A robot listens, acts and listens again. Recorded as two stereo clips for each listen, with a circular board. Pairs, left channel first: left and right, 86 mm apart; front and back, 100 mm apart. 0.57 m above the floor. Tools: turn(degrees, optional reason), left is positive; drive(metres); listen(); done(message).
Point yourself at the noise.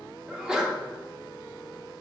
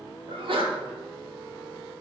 turn(degrees=-175, reason="The sneeze: 175° right.")
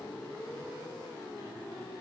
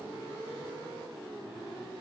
done("I heard a sneeze from this way, but can't make it out now.")